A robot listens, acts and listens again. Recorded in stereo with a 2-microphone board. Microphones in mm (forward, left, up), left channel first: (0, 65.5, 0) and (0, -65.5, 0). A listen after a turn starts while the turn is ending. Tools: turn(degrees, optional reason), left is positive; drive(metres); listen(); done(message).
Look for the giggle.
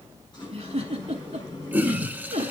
turn(degrees=-55, reason="The giggle: about 55° right or 125° right.")
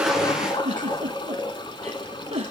turn(degrees=-60, reason="So it is at 60° right.")
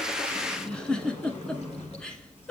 done("Facing the giggle, under 1 m away.")